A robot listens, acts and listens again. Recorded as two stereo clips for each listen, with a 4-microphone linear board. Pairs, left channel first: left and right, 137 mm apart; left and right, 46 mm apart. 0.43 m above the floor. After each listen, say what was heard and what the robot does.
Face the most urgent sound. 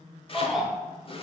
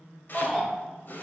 Turn 30° left.
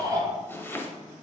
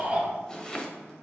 So it is at 30° right. Turn 30° right.
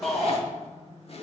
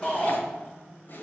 Facing the shout, 1 to 2 m away.